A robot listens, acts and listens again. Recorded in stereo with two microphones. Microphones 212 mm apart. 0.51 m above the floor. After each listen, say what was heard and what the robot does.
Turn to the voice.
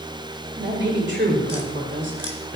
The woman speaking: about 60° right or 120° right. Turn 60° right.
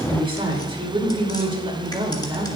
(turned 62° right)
So it is at 30° right. Turn 30° right.
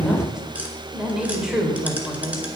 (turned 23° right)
Facing the woman speaking.